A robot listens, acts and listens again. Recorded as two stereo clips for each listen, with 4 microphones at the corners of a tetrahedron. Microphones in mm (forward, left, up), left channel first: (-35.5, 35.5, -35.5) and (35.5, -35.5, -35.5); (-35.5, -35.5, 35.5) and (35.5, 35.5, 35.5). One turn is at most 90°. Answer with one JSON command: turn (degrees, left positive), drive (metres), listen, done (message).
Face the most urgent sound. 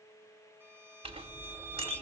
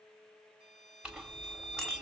{"listen": true}
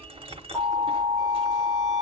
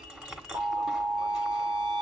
{"turn": 90}
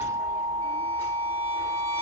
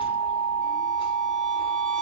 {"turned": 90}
{"turn": 30}
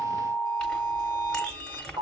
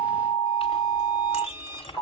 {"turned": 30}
{"done": "Found it: an alarm, straight ahead."}